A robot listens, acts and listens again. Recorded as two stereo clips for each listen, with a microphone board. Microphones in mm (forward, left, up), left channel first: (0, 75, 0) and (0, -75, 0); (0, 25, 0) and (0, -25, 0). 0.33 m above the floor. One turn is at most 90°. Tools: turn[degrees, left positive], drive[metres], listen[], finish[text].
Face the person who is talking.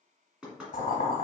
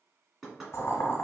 Action: listen[]
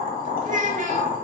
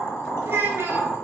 Thought: The child speaking: about 55° right or 125° right.
Action: turn[-55]
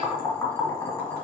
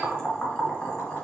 Action: listen[]
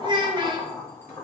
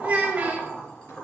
Thought: So it is at 40° right.
Action: turn[-40]
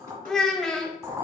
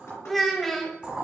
Action: finish[Found it: a child speaking, straight ahead.]